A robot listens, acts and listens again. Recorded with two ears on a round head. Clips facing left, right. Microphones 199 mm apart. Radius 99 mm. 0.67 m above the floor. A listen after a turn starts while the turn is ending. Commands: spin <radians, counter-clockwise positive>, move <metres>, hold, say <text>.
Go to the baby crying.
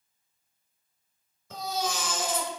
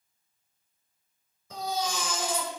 spin 0.52
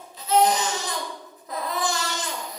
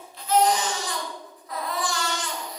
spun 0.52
spin 2.44
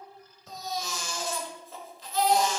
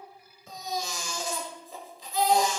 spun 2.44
spin -0.26
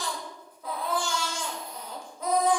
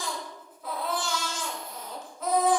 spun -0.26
move 1.0
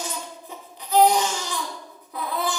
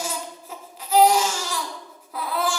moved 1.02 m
move 1.0
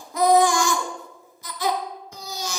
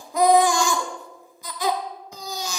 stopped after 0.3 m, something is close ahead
spin -0.26
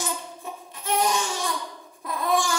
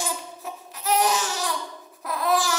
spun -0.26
say Arrived at the baby crying, straight ahead.